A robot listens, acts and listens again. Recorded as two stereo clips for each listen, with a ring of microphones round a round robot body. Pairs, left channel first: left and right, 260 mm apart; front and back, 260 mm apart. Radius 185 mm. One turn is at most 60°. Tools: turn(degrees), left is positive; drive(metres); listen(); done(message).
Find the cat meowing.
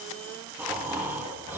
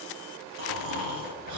listen()
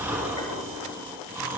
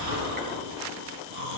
listen()
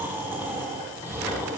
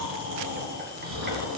done("I can't make out a cat meowing to turn to.")